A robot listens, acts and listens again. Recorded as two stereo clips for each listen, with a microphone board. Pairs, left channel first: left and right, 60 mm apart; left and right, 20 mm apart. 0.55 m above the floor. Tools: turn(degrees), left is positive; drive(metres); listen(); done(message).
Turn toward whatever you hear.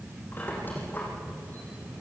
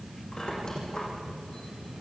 turn(degrees=30)
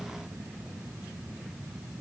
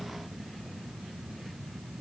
listen()
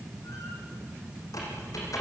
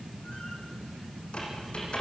turn(degrees=115)
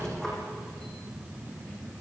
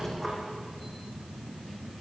done("Found it: a squeak, straight ahead, over 4 m away.")